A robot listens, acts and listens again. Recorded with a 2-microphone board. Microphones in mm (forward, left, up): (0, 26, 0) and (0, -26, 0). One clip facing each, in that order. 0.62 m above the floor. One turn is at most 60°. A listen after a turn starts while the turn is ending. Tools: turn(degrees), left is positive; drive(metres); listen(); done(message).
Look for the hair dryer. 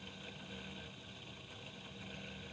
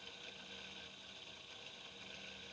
listen()
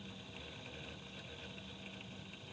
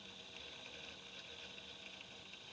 listen()
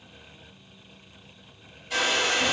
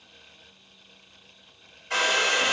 turn(degrees=-50)
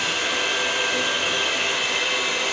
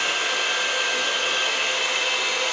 done("Facing the hair dryer, under 1 m away.")